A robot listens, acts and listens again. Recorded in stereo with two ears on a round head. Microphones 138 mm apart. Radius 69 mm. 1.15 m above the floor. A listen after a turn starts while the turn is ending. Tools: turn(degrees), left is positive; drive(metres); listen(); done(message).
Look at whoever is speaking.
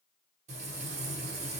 listen()
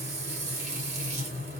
listen()
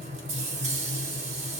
done("I can't make out anyone speaking, only frying.")